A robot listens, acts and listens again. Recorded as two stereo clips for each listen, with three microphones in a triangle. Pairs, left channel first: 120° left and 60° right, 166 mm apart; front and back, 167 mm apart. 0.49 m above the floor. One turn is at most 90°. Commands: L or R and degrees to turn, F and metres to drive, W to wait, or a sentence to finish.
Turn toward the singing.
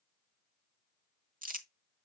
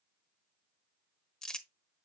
W
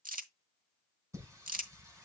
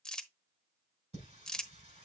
R90
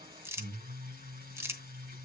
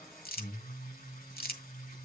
R30
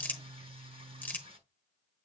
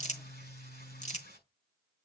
Facing the singing.